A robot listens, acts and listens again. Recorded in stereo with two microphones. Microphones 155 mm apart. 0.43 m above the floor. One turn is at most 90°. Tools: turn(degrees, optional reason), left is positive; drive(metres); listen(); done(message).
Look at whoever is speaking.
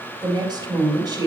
turn(degrees=-30, reason="The woman speaking: about 30° right or 150° right.")
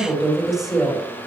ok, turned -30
done("Facing the woman speaking, 2 to 4 m away.")